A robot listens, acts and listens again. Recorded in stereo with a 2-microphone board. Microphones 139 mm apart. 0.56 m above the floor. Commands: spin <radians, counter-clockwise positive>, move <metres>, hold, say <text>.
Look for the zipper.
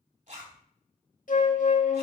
spin -1.05
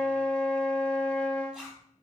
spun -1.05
say Facing the zipper, 2 to 4 m away.